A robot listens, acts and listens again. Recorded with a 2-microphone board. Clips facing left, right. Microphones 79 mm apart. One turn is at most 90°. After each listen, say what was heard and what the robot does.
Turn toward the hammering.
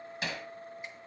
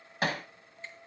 The hammering: about 55° right or 125° right. Turn 55° right.
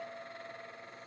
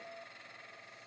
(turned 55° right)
Keep listening.
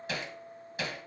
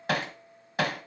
So it is at 70° right. Turn 70° right.
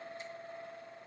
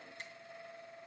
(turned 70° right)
Keep listening.
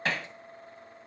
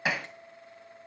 The hammering is now 10° right. Turn 10° right.
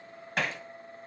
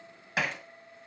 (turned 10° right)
Found it: hammering, straight ahead.